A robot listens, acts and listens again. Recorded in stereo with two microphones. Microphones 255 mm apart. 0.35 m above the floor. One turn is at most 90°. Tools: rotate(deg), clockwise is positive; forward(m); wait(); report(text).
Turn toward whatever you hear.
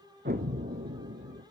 rotate(35)
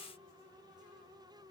wait()
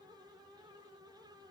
report("I heard an explosion, but can't make it out now. It was about straight ahead or 110° right.")